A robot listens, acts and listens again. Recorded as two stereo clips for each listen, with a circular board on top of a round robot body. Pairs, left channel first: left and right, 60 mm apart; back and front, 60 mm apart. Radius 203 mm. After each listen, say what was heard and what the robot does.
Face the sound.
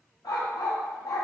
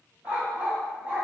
The dog barking: 70° left. Turn 70° left.
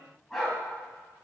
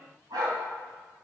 Facing the dog barking, 1 to 2 m away.